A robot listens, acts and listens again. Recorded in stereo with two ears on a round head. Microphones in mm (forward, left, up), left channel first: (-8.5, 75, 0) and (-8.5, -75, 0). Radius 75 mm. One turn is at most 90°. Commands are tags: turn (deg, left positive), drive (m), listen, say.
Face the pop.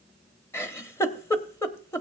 <listen/>
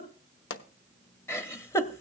<turn deg="90"/>
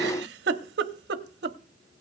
<say>Facing where the pop came from. I can't hear it now.</say>